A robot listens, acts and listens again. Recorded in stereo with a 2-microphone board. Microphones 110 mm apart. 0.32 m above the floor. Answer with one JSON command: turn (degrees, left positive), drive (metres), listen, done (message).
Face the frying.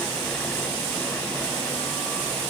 {"listen": true}
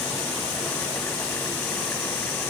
{"listen": true}
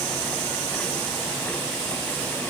{"done": "I can't make out frying to turn to."}